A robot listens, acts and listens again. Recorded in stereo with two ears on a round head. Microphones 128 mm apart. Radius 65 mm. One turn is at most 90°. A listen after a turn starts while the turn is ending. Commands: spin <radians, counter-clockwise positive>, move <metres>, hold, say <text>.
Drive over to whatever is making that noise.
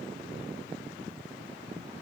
hold
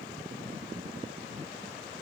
hold
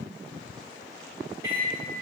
spin -0.26
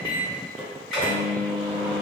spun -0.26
move 1.0
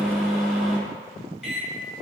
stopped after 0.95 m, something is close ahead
say I am next to the microwave.